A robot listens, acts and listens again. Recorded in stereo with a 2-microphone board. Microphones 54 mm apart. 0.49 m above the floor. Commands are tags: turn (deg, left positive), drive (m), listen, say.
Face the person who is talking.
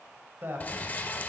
<turn deg="-45"/>
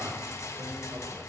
<listen/>
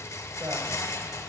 <listen/>
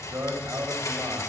<turn deg="-85"/>
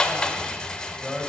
<say>Found it: a man speaking, straight ahead.</say>